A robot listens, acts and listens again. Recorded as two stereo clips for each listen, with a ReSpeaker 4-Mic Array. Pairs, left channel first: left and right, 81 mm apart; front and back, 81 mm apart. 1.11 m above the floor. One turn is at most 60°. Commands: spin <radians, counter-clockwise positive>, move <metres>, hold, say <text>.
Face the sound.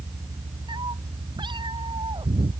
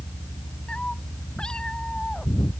spin -1.05
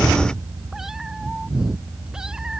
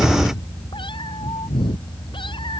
spin -0.17
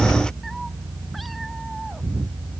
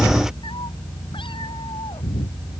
say Facing the cat meowing.